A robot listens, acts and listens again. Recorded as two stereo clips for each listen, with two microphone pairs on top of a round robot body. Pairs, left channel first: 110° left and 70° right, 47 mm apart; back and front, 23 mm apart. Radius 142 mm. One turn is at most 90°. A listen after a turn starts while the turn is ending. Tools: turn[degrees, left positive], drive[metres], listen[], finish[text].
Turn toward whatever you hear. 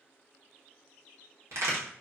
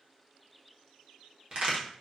Thought: The crack: 45° right.
Action: turn[-45]
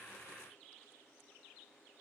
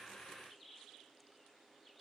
Action: finish[Facing where the crack came from. I can't hear it now.]